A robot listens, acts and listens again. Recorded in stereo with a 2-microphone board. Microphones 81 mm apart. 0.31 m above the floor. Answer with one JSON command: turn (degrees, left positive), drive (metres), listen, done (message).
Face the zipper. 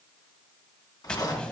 {"turn": 55}
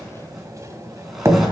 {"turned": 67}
{"listen": true}
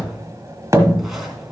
{"listen": true}
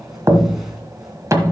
{"done": "I heard a zipper, but can't make it out now. It was about 15° right or 60° left."}